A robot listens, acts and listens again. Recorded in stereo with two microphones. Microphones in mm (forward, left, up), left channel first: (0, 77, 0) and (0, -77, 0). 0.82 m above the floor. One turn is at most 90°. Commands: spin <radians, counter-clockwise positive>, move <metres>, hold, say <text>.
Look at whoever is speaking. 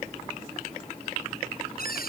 hold
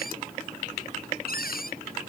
hold
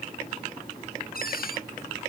say I can't make out anyone speaking, only a cupboard door.